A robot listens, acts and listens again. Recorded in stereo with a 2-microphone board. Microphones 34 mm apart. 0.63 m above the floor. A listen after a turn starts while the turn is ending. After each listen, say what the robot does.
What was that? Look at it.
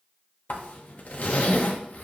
Turn 50° left.
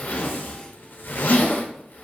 Turn 75° left.
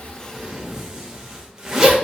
Turn 15° right.
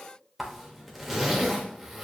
Facing the zipper.